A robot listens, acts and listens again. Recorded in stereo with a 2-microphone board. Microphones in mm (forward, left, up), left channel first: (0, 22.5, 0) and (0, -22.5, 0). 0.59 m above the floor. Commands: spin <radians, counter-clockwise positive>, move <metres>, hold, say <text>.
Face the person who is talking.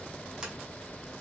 hold
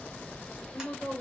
spin 0.61
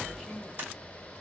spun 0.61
say Facing the woman speaking, 2 to 4 m away.